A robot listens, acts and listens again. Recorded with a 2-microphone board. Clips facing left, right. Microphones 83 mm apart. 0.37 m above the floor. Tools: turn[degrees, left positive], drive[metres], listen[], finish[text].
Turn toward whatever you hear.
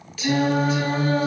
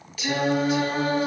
Action: turn[-30]
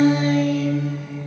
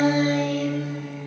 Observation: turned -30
Thought: So it is at 125° right.
Action: turn[-125]
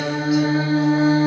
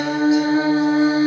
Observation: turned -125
Thought: The singing is now 15° right.
Action: turn[-15]
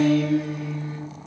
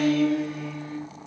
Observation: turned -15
Thought: The singing is now 20° left.
Action: turn[20]
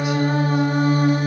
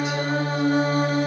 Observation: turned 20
Thought: The singing is now 15° left.
Action: turn[15]
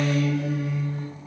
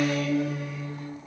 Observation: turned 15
Action: finish[Found it: singing, straight ahead, 1 to 2 m away.]